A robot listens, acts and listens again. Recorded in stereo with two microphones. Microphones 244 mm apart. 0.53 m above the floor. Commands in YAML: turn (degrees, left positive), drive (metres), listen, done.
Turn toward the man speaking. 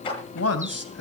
turn: 90
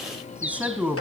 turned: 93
done: "Found it: a man speaking, straight ahead."